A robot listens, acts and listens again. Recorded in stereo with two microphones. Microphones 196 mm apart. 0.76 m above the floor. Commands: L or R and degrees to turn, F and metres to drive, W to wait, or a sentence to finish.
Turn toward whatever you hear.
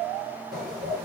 R50
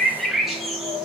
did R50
Found it: a bird, straight ahead.